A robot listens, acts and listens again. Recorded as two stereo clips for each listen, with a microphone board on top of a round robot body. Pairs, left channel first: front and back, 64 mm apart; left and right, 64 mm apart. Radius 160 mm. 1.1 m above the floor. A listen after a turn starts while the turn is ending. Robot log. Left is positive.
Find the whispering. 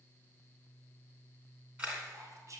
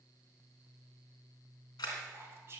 note: The whispering: 145° right.
cmd yaw -145
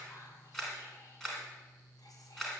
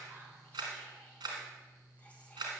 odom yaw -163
note: Nothing new. It was at 20° left.
cmd yaw +20
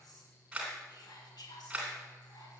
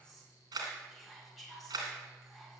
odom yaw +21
end: Found it: whispering, straight ahead, 2 to 4 m away.